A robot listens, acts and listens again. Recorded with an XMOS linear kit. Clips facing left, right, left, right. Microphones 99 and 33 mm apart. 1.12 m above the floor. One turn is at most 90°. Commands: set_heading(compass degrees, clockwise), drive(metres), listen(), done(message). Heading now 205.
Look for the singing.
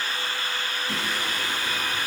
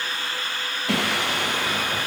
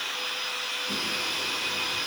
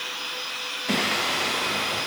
set_heading(275)
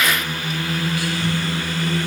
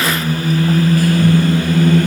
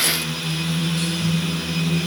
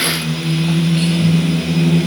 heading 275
set_heading(325)
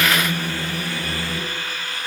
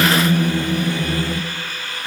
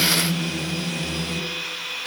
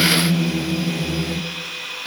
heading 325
set_heading(350)
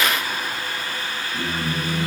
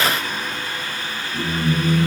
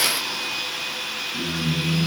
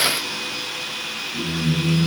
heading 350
done("Facing the singing.")